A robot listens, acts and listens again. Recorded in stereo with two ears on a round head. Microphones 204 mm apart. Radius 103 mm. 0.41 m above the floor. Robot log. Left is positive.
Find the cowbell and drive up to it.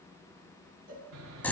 note: The cowbell: about 40° right or 140° right.
cmd yaw -40
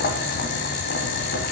cmd idle
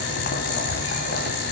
cmd idle
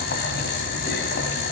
end: I heard a cowbell, but can't make it out now. It was about straight ahead or 100° right. I did not reach it.